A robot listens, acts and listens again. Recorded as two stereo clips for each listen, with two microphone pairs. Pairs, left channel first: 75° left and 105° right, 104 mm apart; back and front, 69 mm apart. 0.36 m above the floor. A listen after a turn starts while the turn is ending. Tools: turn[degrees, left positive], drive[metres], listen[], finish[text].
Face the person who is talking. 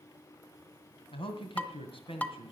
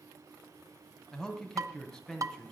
Thought: The man speaking: 95° left.
Action: turn[95]
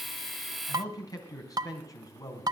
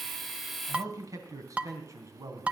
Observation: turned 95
Thought: The man speaking is now 25° left.
Action: turn[25]
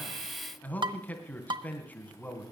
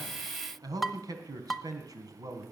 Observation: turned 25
Action: finish[Facing the man speaking, 2 to 4 m away.]